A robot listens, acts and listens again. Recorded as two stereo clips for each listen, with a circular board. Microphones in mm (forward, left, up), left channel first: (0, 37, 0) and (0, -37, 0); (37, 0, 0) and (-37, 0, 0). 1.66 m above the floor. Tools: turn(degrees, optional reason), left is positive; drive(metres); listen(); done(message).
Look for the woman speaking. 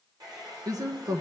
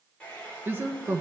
turn(degrees=-125, reason="The woman speaking: 125° right.")
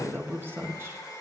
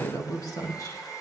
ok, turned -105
turn(degrees=-35, reason="The woman speaking is now 35° right.")
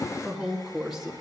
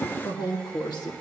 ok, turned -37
done("Facing the woman speaking, 2 to 4 m away.")